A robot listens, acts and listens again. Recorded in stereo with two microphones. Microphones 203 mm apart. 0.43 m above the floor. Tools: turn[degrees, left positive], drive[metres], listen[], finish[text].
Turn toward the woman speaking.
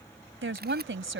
Thought: The woman speaking: about 70° right or 110° right.
Action: turn[-70]
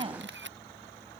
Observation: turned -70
Thought: So it is at 30° right.
Action: turn[-30]
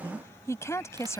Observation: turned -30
Thought: The woman speaking is now 15° left.
Action: turn[15]
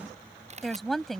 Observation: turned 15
Action: finish[Found it: a woman speaking, straight ahead.]